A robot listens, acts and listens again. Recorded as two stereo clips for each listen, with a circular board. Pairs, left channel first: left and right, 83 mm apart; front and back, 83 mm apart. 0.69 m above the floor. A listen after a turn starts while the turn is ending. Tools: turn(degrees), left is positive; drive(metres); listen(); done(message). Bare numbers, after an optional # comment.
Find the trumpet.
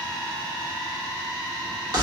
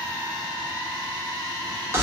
listen()
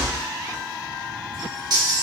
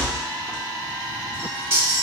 listen()
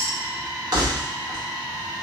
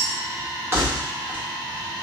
done("I can't make out a trumpet to turn to.")